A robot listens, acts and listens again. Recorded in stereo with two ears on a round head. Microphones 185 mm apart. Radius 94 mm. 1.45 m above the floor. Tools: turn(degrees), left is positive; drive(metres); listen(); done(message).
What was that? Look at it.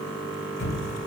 turn(degrees=50)
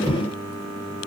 done("Facing the thud, 2 to 4 m away.")